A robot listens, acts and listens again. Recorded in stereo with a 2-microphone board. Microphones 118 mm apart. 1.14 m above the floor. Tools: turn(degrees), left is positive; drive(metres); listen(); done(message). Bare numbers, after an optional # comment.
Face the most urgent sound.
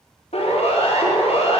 # The siren: about 65° left or 115° left.
turn(65)
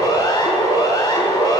# So it is at 45° left.
turn(45)
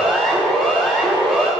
done("Found it: a siren, straight ahead, 2 to 4 m away.")